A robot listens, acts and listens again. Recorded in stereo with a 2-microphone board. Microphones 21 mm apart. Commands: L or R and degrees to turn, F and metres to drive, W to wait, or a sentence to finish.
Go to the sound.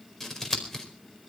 L30
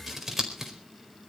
R15
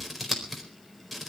F1.0
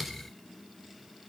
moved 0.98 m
F1.0
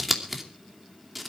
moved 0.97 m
R10
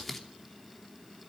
F1.0
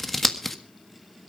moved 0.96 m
F1.0
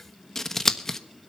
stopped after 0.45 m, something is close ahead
L20
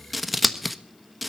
I am next to the scissors.